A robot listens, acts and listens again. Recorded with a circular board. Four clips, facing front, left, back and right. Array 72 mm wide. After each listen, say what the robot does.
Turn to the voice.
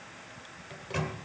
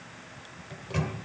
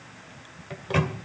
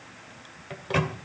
Keep listening.
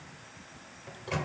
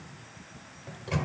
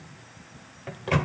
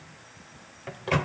Keep listening.
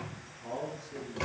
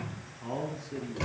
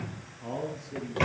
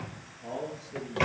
Turn 105° left.
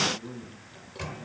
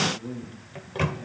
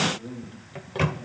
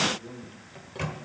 Turn 35° left.
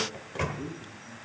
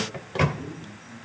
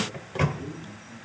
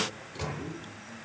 Turn 20° right.
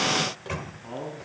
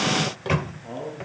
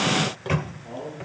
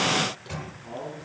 Facing the man speaking.